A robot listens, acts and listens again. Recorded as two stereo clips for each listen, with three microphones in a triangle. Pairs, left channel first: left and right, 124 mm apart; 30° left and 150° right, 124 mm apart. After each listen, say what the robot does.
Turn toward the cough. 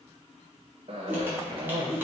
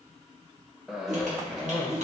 Turn 60° right.
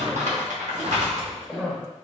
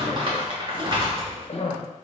Facing the cough, 1 to 2 m away.